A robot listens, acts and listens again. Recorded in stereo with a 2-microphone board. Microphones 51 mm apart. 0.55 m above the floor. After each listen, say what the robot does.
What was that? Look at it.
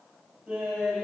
Turn 30° right.
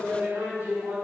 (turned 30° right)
Turn 145° right.
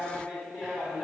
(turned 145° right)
Found it: laughter, straight ahead, over 4 m away.